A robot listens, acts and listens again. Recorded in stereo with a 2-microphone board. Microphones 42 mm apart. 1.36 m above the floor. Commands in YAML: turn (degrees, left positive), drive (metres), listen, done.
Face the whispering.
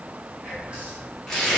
turn: -30
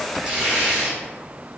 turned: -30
listen: true
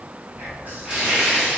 turn: -120
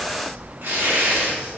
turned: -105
turn: -15
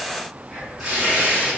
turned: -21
done: "Facing the whispering, 1 to 2 m away."